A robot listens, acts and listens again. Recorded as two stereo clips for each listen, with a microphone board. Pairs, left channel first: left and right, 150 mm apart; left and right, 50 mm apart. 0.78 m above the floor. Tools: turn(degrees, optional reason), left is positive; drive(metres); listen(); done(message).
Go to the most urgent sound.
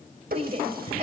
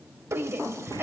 turn(degrees=-45, reason="The shout: about 45° right or 135° right.")
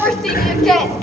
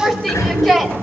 drive(metres=1.0)
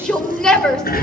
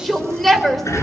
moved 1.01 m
drive(metres=1.0)
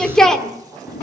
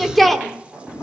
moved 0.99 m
drive(metres=1.0)
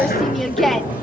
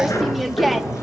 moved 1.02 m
drive(metres=1.0)
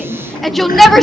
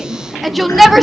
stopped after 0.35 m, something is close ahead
done("I am next to the shout.")